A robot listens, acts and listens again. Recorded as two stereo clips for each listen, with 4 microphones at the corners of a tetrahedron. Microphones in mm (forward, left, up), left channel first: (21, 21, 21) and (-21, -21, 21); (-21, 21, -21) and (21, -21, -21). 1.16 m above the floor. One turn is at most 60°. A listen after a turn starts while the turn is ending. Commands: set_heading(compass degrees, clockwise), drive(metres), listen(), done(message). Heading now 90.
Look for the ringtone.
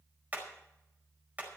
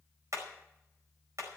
listen()
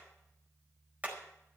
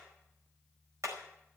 listen()
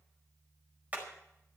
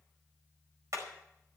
done("I can't make out a ringtone, only hammering.")